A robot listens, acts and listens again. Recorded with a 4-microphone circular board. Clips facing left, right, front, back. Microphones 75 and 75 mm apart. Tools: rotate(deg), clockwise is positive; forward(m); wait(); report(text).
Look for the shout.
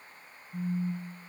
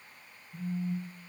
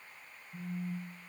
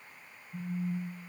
wait()
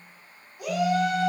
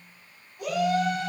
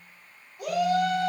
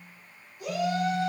rotate(-10)
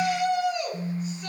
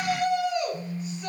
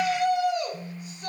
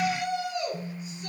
report("Found it: a shout, straight ahead, 2 to 4 m away.")